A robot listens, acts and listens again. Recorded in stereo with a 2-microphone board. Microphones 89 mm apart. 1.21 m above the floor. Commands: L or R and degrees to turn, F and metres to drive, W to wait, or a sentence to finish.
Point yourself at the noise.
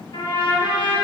L70
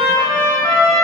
L10
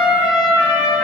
Found it: a trumpet, straight ahead, 1 to 2 m away.